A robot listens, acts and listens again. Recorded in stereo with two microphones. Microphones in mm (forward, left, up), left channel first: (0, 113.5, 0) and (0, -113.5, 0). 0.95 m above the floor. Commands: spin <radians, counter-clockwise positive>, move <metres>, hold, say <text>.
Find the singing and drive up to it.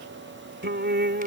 spin -0.87
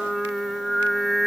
move 1.0
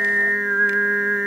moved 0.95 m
move 1.0
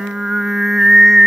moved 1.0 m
move 1.0
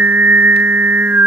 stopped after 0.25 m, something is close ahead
spin -0.17
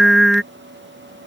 say I am next to the singing.